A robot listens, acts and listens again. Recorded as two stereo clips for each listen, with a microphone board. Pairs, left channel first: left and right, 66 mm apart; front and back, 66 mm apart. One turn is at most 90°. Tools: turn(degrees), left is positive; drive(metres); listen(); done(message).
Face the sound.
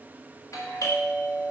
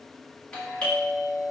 turn(degrees=75)
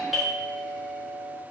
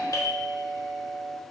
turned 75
done("Facing the doorbell, 1 to 2 m away.")